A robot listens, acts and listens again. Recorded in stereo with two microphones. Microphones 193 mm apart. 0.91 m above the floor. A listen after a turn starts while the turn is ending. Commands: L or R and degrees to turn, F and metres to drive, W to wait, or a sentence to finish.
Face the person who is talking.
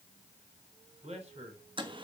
R35
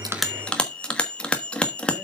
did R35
W
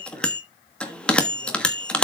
W
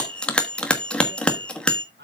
R115
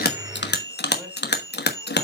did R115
W
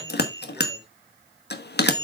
W
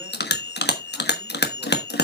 Facing where the man speaking came from. I can't hear it now.